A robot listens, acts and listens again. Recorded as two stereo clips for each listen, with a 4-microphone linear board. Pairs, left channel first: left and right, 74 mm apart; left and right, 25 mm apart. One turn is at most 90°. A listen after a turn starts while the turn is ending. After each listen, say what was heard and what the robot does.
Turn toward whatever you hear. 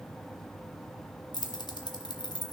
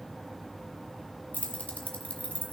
The keys jangling: about 70° left or 110° left. Turn 70° left.
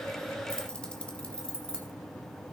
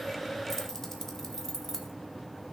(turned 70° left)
So it is at 15° left. Turn 15° left.
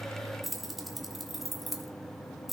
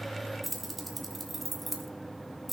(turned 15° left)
Found it: keys jangling, straight ahead.